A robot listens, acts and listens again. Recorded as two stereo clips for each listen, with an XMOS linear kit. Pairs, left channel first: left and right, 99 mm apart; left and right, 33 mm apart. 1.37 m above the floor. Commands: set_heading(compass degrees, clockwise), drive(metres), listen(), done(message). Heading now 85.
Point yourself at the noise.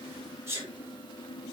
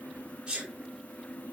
set_heading(110)
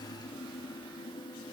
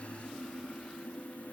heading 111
listen()
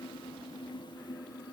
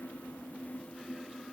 done("I heard a sneeze, but can't make it out now. It was about straight ahead or 125° right.")